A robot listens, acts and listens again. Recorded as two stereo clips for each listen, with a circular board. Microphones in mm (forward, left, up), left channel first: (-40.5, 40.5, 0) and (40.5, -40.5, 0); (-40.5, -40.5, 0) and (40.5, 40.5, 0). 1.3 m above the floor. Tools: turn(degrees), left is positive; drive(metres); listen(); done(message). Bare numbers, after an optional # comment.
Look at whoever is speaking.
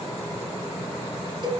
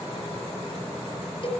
listen()
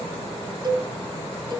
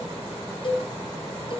listen()
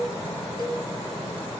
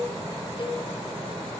done("I can't make out anyone speaking to turn to.")